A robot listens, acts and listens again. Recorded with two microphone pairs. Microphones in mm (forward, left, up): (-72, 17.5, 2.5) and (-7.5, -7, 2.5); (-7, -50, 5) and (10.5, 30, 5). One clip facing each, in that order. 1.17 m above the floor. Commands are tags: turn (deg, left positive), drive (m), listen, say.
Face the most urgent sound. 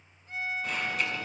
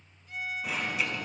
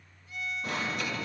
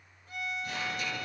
<turn deg="-105"/>
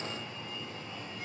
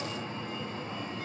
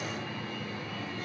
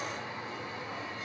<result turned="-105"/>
<turn deg="15"/>
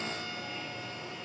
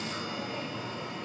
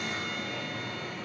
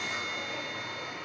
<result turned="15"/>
<say>Found it: an alarm, straight ahead, over 4 m away.</say>